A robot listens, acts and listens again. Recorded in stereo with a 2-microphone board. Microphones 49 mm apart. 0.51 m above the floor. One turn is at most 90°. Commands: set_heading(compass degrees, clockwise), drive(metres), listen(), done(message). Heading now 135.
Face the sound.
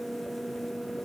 listen()
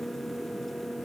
listen()
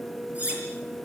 set_heading(165)
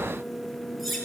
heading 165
done("Found it: cutlery clinking, straight ahead, over 4 m away.")